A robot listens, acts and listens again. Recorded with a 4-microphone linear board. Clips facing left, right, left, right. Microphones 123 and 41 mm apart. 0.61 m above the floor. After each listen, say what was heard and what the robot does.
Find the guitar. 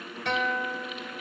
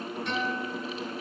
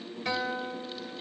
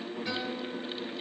The guitar: about 75° left or 105° left. Turn 75° left.
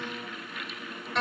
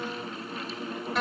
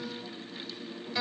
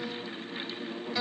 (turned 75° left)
Found it: a guitar, straight ahead.